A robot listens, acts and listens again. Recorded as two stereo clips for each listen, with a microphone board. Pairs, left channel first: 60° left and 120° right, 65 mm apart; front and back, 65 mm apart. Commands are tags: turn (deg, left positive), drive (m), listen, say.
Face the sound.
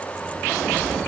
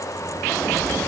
<turn deg="-80"/>
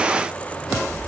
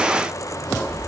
<say>Found it: a sliding door, straight ahead, over 4 m away.</say>